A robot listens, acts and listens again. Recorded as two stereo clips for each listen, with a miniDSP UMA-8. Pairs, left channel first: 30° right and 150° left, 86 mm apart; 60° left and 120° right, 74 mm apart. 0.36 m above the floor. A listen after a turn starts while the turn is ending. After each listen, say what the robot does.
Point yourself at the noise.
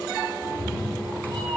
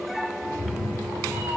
Turn 155° left.
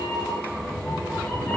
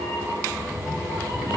Turn 35° left.
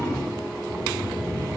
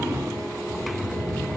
Facing the cat meowing, 2 to 4 m away.